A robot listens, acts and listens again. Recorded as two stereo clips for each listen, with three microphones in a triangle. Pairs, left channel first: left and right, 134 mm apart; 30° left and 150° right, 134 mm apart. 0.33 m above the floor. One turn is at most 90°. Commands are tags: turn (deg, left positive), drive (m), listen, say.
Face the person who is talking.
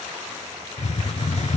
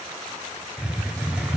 <listen/>
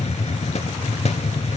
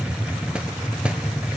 <listen/>
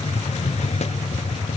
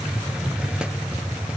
<say>I can't make out anyone speaking, only a hiss.</say>